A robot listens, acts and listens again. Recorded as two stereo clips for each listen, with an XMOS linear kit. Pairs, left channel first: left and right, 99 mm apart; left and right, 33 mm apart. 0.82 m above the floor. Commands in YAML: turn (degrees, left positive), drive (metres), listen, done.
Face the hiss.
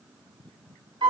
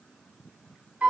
listen: true
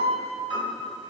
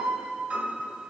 listen: true
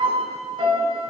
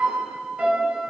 done: "I can't make out a hiss to turn to."